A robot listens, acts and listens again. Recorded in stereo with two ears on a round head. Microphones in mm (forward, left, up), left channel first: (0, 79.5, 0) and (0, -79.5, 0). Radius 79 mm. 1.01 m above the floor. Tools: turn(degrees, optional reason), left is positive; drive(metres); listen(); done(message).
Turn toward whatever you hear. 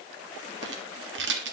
turn(degrees=-70, reason="The rattle: about 70° right or 110° right.")
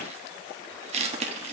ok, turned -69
turn(degrees=-40, reason="So it is at 40° right.")
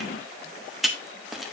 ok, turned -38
done("Facing the rattle.")